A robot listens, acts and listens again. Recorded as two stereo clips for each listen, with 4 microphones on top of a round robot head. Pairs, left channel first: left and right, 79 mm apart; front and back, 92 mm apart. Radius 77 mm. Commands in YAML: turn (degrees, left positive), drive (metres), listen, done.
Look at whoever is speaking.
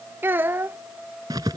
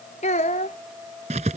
turn: -30
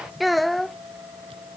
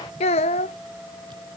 done: "Found it: a child speaking, straight ahead."